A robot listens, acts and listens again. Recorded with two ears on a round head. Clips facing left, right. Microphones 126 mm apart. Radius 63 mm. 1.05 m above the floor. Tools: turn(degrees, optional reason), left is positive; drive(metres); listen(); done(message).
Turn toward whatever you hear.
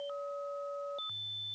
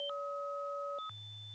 listen()
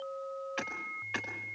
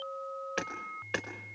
turn(degrees=-60, reason="The hammering: about 60° right or 120° right.")
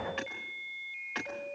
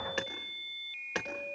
turn(degrees=-55, reason="So it is at 55° right.")
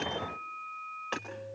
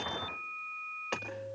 done("Found it: hammering, straight ahead.")